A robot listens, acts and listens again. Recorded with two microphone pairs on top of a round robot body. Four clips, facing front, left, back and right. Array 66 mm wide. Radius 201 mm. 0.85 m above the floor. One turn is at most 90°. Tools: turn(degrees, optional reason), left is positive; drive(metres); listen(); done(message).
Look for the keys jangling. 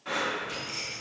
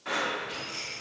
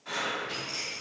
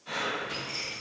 turn(degrees=-90, reason="The keys jangling: 170° right.")
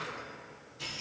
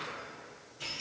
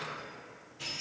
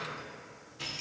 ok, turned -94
turn(degrees=-90, reason="The keys jangling is now 100° right.")
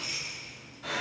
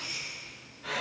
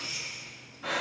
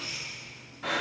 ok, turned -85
turn(degrees=-30, reason="The keys jangling is now 30° right.")
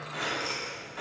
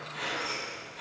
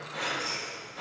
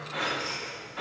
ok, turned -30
turn(degrees=-15, reason="The keys jangling is now 15° right.")
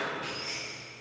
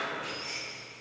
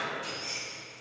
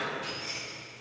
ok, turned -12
done("Found it: keys jangling, straight ahead.")